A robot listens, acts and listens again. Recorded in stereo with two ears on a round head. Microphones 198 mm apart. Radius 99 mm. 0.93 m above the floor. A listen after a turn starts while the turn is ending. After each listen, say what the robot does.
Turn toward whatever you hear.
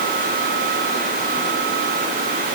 Keep listening.
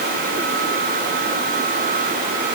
Keep listening.
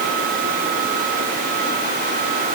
I can't make out anything.